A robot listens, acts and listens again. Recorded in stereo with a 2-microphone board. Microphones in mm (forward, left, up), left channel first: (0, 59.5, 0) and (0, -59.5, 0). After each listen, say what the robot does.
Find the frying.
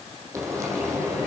Turn 25° right.
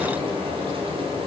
Turn 130° right.
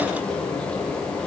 Turn 10° left.
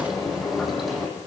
Found it: frying, straight ahead, over 4 m away.